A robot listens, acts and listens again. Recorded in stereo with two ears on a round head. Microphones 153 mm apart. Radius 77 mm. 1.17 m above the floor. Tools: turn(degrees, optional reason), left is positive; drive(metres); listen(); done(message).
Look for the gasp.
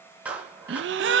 turn(degrees=-90)
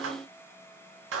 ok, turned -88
done("I heard a gasp from this way, but can't make it out now.")